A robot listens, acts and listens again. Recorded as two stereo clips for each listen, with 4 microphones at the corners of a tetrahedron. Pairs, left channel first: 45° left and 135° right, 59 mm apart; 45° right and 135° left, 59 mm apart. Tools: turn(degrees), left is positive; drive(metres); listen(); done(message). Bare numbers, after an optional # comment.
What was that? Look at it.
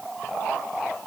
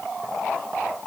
listen()
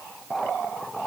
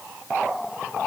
listen()
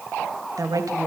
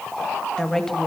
# The woman speaking: 130° right.
turn(-130)
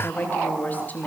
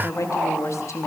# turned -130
# The woman speaking is now 20° right.
turn(-20)
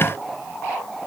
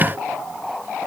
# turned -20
listen()
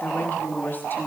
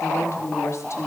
# The woman speaking is now 15° right.
turn(-15)
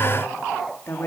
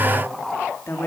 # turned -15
done("Found it: a woman speaking, straight ahead, 2 to 4 m away.")